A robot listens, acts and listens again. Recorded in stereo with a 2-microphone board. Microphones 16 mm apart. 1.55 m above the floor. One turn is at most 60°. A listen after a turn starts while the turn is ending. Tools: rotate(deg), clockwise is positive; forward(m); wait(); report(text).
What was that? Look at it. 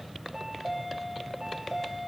rotate(15)
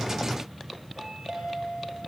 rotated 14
rotate(60)
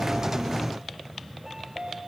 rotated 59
rotate(60)
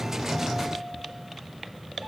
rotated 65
rotate(25)
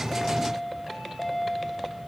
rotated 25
report("Found it: a chime, straight ahead, over 4 m away.")